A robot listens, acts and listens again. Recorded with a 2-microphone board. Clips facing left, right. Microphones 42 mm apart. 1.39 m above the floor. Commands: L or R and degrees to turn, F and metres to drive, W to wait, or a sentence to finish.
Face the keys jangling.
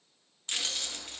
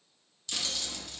L45
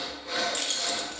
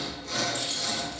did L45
L90
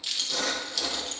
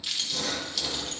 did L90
Facing the keys jangling, 1 to 2 m away.